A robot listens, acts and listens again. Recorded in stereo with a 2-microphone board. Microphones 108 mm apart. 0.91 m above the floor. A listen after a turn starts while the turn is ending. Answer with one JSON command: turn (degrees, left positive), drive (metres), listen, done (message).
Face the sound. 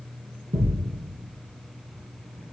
{"turn": -60}
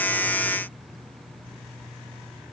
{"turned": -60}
{"listen": true}
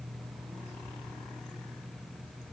{"done": "I heard a thud, but can't make it out now. It was about straight ahead or 60° right."}